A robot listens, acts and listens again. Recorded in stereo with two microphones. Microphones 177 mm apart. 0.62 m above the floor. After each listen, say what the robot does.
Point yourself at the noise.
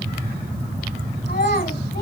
Turn 60° left.
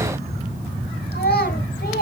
Turn 60° left.
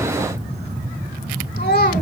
Turn 50° left.
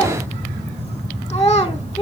Turn 25° left.
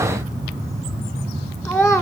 Found it: a child speaking, straight ahead.